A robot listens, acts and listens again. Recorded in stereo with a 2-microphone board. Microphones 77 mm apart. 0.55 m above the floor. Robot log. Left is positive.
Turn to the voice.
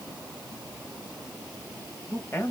note: The man speaking: about 35° left or 145° left.
cmd yaw +35
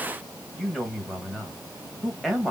end: Facing the man speaking, 2 to 4 m away.